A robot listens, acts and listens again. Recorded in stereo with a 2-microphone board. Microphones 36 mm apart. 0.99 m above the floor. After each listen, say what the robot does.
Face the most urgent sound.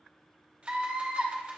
Turn 45° right.
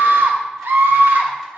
Turn 90° right.
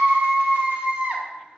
Turn 30° right.
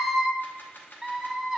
Found it: a scream, straight ahead, under 1 m away.